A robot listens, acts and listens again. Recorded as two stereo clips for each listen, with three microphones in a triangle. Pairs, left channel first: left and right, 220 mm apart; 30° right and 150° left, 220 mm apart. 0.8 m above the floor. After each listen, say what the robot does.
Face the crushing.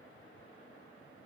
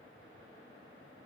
Keep listening.
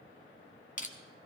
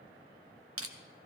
Turn 145° left.
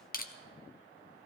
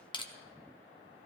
Turn 35° left.
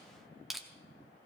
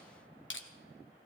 Found it: crushing, straight ahead.